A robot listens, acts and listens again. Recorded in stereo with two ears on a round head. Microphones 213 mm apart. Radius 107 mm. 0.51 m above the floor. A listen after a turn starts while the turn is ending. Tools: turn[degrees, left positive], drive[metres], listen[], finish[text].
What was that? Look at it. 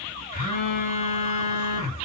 Action: turn[90]
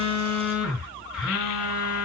Action: finish[Facing the phone buzzing, over 4 m away.]